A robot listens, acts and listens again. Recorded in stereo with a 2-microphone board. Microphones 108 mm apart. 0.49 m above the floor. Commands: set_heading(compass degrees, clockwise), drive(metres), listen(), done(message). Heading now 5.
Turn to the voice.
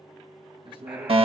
set_heading(55)
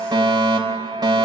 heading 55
listen()
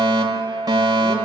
listen()
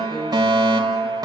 done("I heard a man speaking, but can't make it out now. It was about straight ahead or 80° right.")